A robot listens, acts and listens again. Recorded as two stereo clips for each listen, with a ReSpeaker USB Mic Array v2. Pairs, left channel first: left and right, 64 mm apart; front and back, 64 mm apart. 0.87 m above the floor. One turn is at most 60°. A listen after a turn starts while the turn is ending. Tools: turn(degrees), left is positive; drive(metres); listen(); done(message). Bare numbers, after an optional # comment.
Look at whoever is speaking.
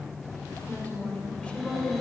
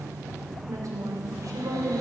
# The woman speaking: 170° left.
turn(60)
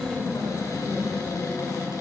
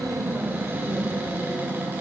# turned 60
# The woman speaking is now 120° left.
turn(60)
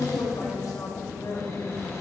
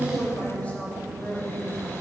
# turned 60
# The woman speaking is now 70° left.
turn(60)
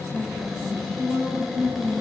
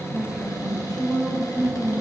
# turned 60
# The woman speaking is now 20° left.
turn(20)
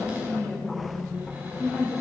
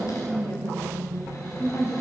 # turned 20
done("Found it: a woman speaking, straight ahead, over 4 m away.")